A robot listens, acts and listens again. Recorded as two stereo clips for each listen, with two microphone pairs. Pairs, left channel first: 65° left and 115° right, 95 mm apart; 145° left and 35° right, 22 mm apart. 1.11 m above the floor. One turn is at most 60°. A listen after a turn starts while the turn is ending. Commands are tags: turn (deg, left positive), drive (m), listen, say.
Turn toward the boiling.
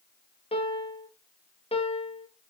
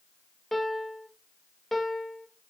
<listen/>
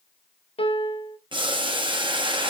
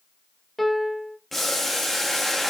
<turn deg="-60"/>
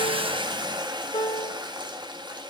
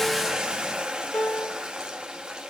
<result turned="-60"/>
<turn deg="-60"/>
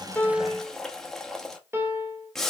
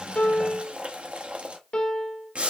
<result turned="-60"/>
<turn deg="-15"/>
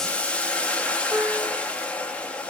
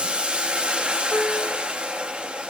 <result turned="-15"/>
<turn deg="-10"/>
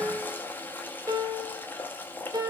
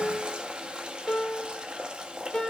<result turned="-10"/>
<say>Found it: boiling, straight ahead, under 1 m away.</say>